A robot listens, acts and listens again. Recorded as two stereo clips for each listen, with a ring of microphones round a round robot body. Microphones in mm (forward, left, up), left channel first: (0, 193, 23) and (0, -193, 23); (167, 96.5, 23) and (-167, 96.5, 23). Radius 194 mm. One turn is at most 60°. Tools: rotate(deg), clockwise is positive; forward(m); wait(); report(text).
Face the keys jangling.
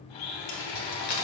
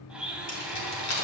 rotate(-40)
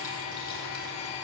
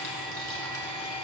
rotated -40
wait()
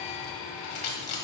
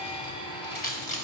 rotate(-60)
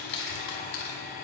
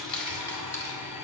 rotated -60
rotate(-30)
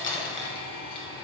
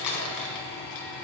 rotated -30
rotate(-15)
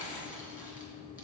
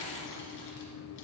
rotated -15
wait()
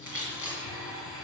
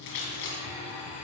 report("Facing the keys jangling.")